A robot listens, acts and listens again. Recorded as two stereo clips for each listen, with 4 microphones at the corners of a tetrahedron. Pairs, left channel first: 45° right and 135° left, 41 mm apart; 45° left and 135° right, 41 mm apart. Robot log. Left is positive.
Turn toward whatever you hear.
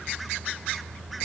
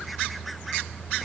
cmd idle
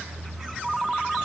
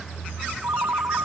note: The ringtone: 140° right.
cmd yaw -140
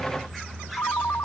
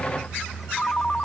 note: The ringtone is now 20° right.
cmd yaw -20
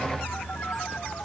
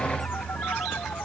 cmd idle
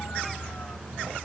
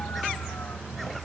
cmd idle
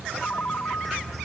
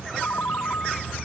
end: Found it: a ringtone, straight ahead.